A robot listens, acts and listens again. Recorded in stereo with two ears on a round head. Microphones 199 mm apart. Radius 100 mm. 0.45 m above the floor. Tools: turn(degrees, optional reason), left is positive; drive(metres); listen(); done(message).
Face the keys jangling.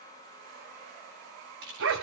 turn(degrees=-60, reason="The keys jangling: about 60° right or 120° right.")
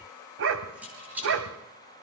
turn(degrees=-10, reason="So it is at 10° right.")
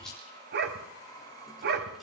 done("Facing the keys jangling.")